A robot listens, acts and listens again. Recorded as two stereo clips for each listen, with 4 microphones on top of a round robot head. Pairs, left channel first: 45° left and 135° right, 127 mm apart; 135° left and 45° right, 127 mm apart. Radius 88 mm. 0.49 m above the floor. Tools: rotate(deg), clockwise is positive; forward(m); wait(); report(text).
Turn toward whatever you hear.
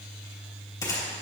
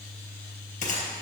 rotate(-110)
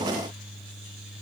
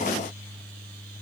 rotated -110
report("Facing where the gunshot came from. I can't hear it now.")